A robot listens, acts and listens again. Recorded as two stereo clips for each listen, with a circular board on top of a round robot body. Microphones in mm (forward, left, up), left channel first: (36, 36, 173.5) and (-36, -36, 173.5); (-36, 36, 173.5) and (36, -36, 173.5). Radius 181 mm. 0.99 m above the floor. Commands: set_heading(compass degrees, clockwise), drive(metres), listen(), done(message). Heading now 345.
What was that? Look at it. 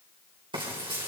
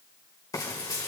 set_heading(155)
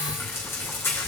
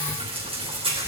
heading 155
set_heading(175)
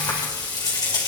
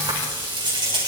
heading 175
done("Found it: frying, straight ahead.")